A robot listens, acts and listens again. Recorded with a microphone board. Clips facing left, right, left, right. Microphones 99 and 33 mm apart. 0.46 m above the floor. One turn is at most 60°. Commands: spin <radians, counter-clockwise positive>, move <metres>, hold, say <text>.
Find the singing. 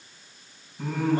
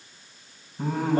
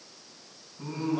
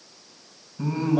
spin -0.70
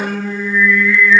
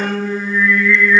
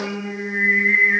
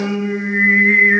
spin -1.05
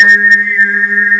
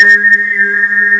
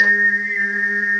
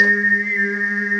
spin -0.52
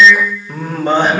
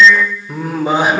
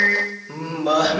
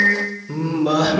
say Found it: singing, straight ahead.